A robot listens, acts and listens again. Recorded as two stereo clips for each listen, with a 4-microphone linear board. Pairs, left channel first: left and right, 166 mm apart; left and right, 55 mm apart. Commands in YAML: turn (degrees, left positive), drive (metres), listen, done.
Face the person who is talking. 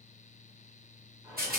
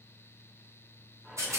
listen: true
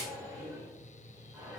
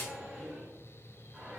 listen: true
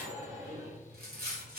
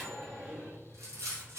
done: "I can't make out anyone speaking, only a rattle and a microwave."